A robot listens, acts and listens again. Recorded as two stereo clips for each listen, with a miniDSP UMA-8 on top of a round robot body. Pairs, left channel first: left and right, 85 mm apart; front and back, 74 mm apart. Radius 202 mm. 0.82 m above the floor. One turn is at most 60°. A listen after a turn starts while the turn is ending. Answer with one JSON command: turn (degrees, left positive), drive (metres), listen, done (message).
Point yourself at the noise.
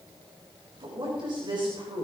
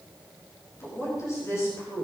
{"turn": -50}
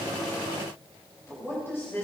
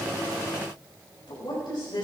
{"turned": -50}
{"turn": 25}
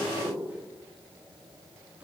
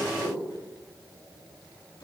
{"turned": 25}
{"turn": -10}
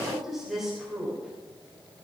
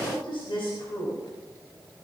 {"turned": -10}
{"done": "Found it: a woman speaking, straight ahead."}